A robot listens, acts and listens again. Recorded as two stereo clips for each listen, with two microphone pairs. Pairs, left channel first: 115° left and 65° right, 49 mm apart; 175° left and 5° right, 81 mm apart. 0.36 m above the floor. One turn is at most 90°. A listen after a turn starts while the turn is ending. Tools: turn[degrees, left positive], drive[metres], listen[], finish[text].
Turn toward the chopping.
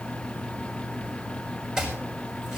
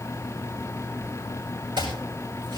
Thought: The chopping: 15° left.
Action: turn[15]
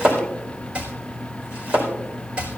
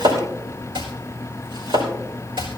Action: finish[Found it: chopping, straight ahead, over 4 m away.]